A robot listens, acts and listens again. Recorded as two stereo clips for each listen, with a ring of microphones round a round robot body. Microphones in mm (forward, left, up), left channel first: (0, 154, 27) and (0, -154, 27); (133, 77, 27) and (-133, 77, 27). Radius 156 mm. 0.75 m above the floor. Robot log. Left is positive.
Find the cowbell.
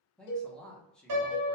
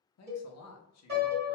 note: The cowbell: 100° left.
cmd yaw +100
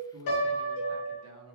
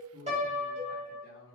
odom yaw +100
note: The cowbell is now 25° right.
cmd yaw -25
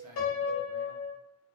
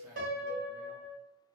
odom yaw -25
cmd idle
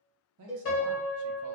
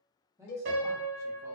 end: Found it: a cowbell, straight ahead.